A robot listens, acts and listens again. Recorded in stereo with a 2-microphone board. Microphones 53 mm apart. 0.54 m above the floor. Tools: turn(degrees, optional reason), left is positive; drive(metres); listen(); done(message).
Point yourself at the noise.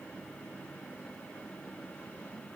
listen()
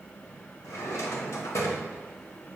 turn(degrees=90)
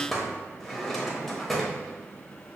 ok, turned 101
done("Facing the drawer.")